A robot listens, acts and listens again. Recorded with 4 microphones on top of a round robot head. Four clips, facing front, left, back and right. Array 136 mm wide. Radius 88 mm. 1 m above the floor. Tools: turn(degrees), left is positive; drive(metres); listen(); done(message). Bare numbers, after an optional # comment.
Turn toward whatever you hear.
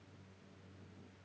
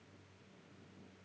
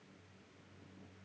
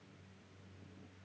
listen()
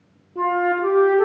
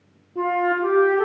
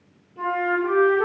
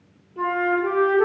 # The flute: 40° left.
turn(40)
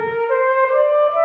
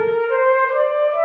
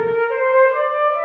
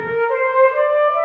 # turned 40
done("Found it: a flute, straight ahead, 2 to 4 m away.")